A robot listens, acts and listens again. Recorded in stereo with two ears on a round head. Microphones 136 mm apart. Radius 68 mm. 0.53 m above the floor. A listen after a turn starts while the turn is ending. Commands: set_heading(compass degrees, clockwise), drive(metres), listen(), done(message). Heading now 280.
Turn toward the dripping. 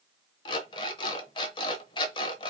listen()
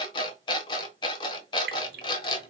set_heading(350)
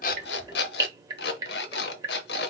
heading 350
set_heading(15)
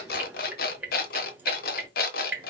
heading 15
set_heading(25)
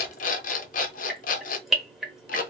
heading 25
done("Facing the dripping.")